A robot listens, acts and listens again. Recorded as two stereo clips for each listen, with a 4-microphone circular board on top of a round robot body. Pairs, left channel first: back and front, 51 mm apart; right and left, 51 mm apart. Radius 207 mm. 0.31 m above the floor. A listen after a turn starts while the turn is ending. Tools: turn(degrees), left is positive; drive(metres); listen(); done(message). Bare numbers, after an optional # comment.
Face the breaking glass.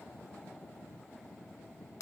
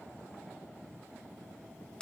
listen()
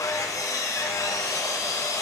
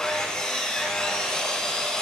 listen()
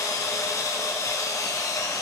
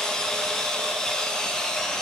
done("I can't make out breaking glass, only sawing.")